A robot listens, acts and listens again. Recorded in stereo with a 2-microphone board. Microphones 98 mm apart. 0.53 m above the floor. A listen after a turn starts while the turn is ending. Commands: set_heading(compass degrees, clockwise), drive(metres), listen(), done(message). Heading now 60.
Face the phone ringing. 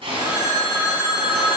set_heading(85)
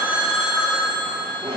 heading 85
done("Found it: a phone ringing, straight ahead, 1 to 2 m away.")